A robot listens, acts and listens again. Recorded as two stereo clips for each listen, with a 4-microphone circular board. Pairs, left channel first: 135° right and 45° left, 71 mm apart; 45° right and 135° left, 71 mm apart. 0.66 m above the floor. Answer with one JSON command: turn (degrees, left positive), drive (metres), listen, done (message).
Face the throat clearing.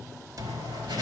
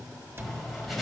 {"listen": true}
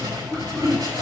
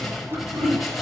{"turn": 140}
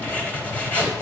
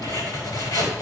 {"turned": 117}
{"turn": 25}
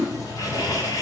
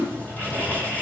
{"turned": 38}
{"turn": -15}
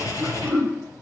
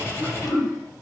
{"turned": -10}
{"done": "Found it: throat clearing, straight ahead."}